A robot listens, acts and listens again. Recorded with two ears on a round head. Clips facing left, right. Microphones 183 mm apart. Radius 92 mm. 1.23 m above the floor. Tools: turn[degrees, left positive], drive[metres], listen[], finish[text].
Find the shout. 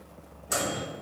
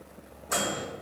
Action: listen[]
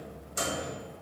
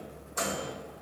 Action: listen[]
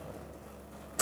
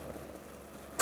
Action: finish[I can't make out a shout to turn to.]